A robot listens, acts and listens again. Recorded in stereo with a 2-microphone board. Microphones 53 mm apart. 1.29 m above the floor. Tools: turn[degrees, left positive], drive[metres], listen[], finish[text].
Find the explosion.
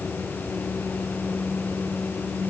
Action: listen[]
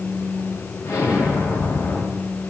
Action: turn[90]
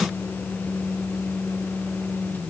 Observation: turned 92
Action: finish[Facing where the explosion came from. I can't hear it now.]